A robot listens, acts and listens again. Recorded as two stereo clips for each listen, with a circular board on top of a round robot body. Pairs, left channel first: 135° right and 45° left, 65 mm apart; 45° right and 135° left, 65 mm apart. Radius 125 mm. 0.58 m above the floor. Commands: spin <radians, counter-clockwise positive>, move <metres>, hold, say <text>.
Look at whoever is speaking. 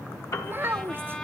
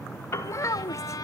spin -0.17
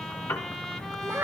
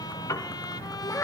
say Found it: a child speaking, straight ahead, under 1 m away.